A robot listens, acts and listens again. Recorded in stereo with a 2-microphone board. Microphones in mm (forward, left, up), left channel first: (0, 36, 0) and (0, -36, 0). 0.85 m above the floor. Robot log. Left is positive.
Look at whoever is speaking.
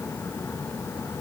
cmd idle
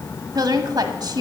note: The woman speaking: about 65° right or 115° right.
cmd yaw -65
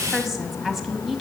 end: Facing the woman speaking, 1 to 2 m away.